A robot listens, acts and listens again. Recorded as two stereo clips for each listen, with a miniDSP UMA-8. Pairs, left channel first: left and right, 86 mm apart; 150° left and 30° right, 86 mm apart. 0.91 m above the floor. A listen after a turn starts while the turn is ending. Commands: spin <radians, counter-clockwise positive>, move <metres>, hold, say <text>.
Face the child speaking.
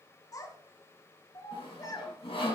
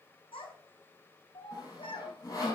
spin 2.44
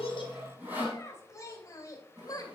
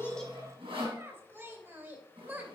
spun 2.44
spin 0.70
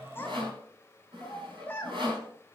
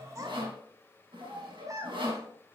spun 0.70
spin 0.35
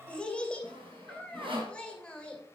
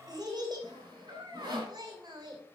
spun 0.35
spin 0.17
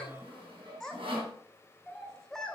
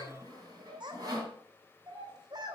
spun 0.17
say Facing the child speaking, 2 to 4 m away.